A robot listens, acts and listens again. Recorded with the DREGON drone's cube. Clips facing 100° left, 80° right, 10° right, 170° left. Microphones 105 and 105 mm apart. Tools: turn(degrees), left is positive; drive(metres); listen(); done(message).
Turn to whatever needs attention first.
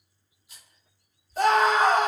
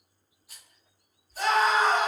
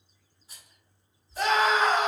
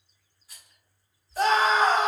turn(degrees=120)
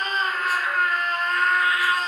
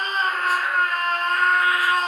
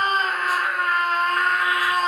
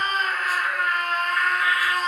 turn(degrees=-45)
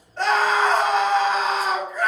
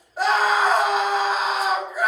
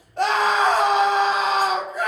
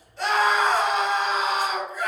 done("Facing the scream, 1 to 2 m away.")